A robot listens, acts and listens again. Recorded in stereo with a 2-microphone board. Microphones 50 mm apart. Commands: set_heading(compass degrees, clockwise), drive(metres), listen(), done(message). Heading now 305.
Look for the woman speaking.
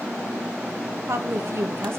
set_heading(5)
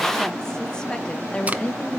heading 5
set_heading(340)
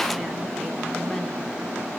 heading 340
listen()
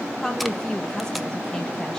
set_heading(325)
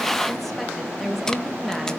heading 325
done("Facing the woman speaking, 2 to 4 m away.")